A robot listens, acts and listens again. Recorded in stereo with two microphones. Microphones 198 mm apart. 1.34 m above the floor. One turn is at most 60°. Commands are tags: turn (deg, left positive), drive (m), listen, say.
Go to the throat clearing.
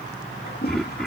<turn deg="30"/>
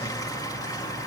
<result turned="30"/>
<listen/>
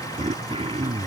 <turn deg="-30"/>
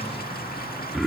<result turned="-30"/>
<drive m="1.0"/>
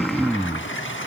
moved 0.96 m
<drive m="1.0"/>
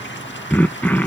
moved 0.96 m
<turn deg="10"/>
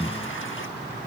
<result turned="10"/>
<drive m="1.0"/>
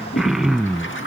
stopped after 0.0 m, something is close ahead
<say>I am next to the throat clearing.</say>